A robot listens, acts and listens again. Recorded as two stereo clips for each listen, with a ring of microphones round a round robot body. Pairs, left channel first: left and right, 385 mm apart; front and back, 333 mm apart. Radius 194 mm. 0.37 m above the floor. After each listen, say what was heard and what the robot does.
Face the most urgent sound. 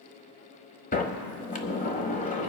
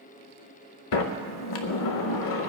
Keep listening.
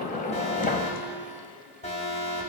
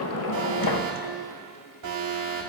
The alarm: 160° left. Turn 160° left.
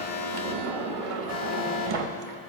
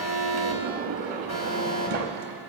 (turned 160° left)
The alarm is now 25° left. Turn 25° left.
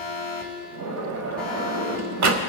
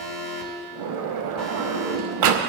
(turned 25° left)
Found it: an alarm, straight ahead.